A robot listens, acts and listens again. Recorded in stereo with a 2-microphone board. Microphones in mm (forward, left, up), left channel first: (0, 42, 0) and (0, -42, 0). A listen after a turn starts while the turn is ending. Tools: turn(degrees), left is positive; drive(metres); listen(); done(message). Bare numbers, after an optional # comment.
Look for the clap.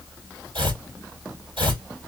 listen()
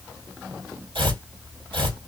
listen()
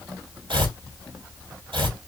done("I can't make out a clap to turn to.")